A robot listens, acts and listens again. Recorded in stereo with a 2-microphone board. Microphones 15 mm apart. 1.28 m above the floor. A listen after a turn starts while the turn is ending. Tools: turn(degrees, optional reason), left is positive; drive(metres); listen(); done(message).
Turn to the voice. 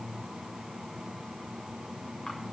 listen()
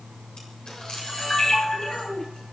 turn(degrees=90)
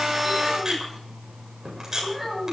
done("Found it: a child speaking, straight ahead.")